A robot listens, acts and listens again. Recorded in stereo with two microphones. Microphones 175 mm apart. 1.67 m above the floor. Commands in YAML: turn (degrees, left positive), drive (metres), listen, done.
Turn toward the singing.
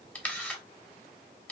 listen: true
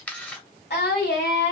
turn: 90
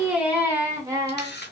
turn: -20
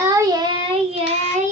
turn: -45
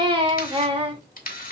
turn: -30
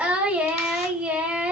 turn: -10
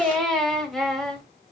done: "Found it: singing, straight ahead, 1 to 2 m away."